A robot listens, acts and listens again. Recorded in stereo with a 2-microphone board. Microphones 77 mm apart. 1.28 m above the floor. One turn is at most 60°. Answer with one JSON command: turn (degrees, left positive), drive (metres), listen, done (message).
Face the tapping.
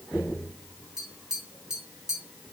{"turn": -30}
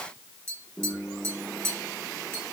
{"turn": -60}
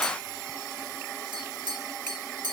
{"turn": -60}
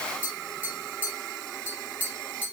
{"turn": -20}
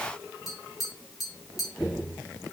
{"done": "Facing the tapping."}